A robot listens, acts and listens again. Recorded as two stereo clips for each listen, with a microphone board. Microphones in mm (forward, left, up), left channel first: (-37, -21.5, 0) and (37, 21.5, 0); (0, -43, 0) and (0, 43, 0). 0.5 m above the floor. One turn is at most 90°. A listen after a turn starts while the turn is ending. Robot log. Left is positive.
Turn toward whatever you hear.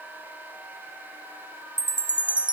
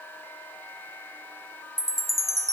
note: The chime: 45° left.
cmd yaw +45
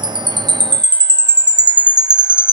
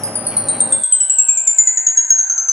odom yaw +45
end: Facing the chime.